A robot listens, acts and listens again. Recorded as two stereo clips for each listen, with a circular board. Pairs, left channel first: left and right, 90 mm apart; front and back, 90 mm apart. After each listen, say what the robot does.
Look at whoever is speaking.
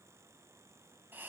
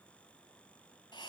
Keep listening.
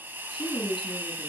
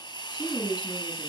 Turn 45° left.
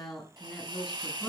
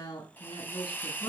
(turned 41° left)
Found it: a woman speaking, straight ahead.